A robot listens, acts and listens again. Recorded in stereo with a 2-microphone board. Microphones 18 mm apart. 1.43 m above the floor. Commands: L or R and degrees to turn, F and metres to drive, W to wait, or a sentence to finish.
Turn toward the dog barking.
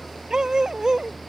R40
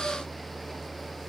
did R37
W
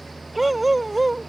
Found it: a dog barking, straight ahead.